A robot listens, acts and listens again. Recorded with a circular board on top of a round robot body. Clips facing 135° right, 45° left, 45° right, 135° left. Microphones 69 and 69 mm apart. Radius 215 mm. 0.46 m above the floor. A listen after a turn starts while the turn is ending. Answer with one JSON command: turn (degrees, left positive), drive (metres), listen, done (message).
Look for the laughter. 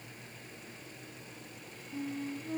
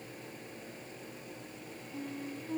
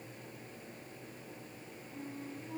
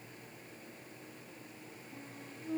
{"listen": true}
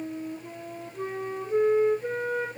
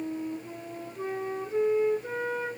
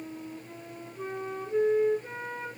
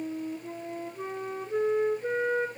{"listen": true}
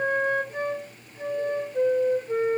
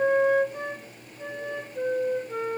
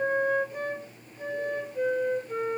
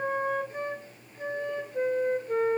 {"done": "I can't make out laughter to turn to."}